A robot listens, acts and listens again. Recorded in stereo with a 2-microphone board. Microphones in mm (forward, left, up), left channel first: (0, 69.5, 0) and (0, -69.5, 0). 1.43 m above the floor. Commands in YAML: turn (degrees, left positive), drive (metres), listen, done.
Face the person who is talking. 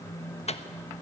listen: true
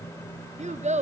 turn: -65
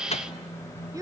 turn: -30
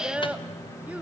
turn: -10
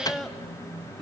done: "Facing the child speaking."